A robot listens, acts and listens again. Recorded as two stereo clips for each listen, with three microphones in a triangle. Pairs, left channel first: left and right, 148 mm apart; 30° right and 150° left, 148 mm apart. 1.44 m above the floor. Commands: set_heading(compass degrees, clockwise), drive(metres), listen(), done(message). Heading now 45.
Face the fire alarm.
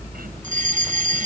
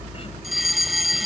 set_heading(165)
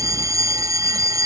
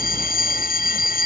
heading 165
set_heading(190)
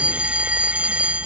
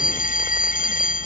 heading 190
set_heading(200)
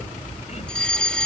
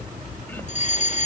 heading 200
done("Found it: a fire alarm, straight ahead.")